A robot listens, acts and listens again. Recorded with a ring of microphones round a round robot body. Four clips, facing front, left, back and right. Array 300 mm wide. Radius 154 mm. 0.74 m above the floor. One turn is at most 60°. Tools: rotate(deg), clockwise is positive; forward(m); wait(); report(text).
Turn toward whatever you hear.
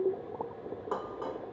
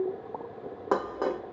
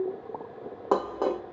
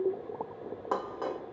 rotate(-60)
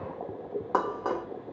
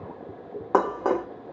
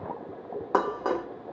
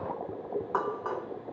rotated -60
rotate(-60)
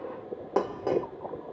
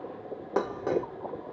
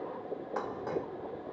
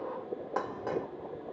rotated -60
rotate(-35)
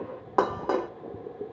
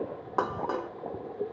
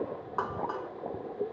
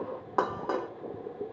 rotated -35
report("Facing the dishes clattering.")